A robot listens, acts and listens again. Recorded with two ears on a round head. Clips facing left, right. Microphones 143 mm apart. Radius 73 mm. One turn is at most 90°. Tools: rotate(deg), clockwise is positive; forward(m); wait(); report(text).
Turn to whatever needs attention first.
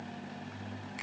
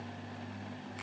wait()
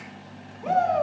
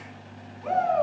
rotate(-40)
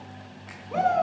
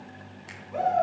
rotate(-90)
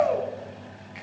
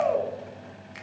report("Found it: a shout, straight ahead.")